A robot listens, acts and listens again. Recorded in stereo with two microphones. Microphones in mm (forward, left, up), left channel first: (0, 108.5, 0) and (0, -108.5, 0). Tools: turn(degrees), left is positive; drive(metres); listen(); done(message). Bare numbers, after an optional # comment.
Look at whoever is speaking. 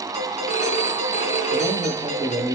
turn(-30)
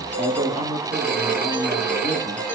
# So it is at 140° right.
turn(-140)
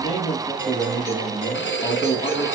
# The man speaking is now 25° right.
turn(-25)
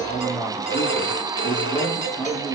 done("Facing the man speaking, over 4 m away.")